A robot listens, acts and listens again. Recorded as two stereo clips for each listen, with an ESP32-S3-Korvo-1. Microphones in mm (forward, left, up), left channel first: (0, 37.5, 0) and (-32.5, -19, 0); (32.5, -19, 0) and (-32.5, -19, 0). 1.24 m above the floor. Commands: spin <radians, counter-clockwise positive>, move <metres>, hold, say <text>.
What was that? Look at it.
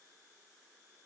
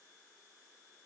hold
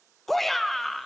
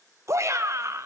spin 2.53
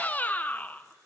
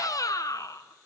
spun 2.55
say Found it: a shout, straight ahead.